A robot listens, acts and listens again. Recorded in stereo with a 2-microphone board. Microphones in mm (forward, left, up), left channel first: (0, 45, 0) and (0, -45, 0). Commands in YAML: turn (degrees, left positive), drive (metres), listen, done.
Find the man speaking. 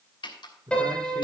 turn: -55
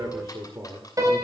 turn: -30
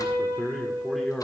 done: "Facing the man speaking."